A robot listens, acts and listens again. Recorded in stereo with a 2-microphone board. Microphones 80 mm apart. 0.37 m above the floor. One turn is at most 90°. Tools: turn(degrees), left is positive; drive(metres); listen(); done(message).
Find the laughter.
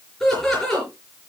turn(degrees=30)
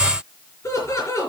turn(degrees=90)
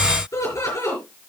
turn(degrees=45)
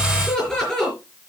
turn(degrees=10)
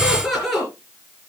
done("Facing the laughter, over 4 m away.")